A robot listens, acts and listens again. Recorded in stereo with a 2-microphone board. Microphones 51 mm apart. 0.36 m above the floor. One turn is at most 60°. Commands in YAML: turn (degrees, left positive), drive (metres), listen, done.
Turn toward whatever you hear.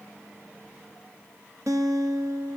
turn: -60
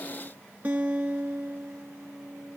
turn: -35
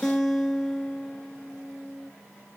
done: "Facing the guitar."